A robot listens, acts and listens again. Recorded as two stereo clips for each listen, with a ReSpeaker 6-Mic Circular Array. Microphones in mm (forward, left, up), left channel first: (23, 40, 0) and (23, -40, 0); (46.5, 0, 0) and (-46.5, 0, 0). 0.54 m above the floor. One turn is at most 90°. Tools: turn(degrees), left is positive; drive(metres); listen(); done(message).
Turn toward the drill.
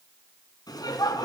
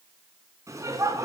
listen()
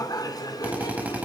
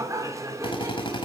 turn(degrees=-20)
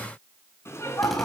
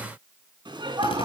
listen()
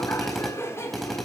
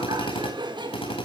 done("Facing the drill, over 4 m away.")